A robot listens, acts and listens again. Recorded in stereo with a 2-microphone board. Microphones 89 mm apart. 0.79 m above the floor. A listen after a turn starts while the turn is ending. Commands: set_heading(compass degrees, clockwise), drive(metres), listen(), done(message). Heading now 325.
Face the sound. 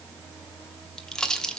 set_heading(295)
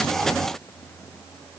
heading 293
listen()
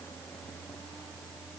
done("I heard a pop, but can't make it out now. It was about 25° right or 140° left.")